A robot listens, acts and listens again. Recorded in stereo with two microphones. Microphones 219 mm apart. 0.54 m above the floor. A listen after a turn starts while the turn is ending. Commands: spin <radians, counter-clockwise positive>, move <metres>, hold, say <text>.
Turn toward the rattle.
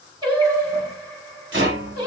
spin -1.05
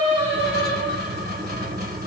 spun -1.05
spin -0.87
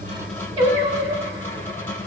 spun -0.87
spin 0.17
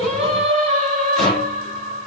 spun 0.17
say Found it: a rattle, straight ahead, 1 to 2 m away.